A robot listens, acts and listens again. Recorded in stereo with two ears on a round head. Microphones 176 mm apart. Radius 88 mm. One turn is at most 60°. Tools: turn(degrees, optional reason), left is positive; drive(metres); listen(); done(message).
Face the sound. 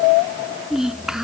turn(degrees=-30)
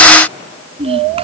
turn(degrees=-60, reason="So it is at 145° right.")
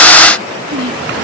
turn(degrees=-60, reason="The child speaking is now 110° right.")
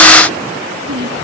turn(degrees=-60, reason="The child speaking is now 60° right.")
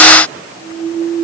listen()
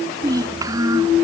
turn(degrees=-20, reason="The child speaking is now 20° right.")
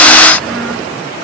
listen()
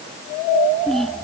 done("Found it: a child speaking, straight ahead.")